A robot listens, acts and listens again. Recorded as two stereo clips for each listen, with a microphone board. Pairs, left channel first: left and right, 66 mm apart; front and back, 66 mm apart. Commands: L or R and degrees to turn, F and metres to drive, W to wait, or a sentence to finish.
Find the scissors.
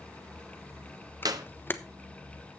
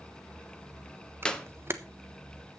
W
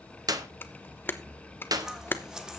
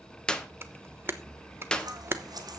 R170
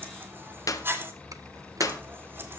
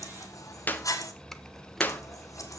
R35
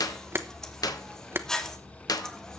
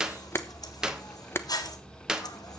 L10
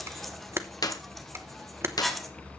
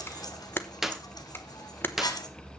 Found it: scissors, straight ahead, 1 to 2 m away.